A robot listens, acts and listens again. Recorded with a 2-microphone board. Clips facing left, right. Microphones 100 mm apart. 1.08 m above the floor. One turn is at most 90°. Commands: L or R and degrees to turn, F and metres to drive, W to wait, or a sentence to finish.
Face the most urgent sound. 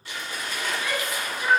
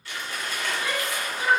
R30
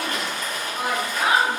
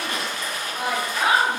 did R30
Facing the shout.